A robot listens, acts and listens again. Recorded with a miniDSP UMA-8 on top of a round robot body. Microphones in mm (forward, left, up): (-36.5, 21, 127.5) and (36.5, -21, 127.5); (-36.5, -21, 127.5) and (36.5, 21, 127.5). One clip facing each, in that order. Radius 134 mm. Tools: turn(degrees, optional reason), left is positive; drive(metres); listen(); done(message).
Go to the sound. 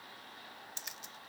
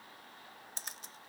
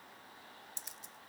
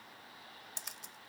turn(degrees=20, reason="The camera shutter: 20° left.")
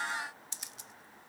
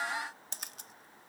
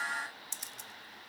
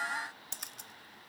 drive(metres=1.0)
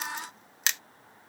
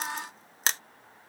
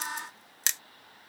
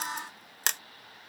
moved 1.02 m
turn(degrees=15, reason="The camera shutter is now 15° left.")
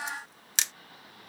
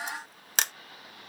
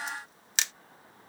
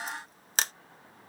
drive(metres=1.0)
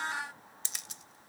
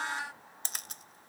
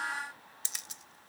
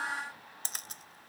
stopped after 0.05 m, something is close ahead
done("I am next to the camera shutter.")